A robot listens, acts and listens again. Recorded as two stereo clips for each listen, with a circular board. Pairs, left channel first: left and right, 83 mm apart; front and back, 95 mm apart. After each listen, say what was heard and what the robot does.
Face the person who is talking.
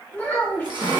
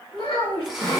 The child speaking: 20° left. Turn 20° left.
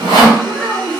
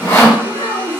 Facing the child speaking.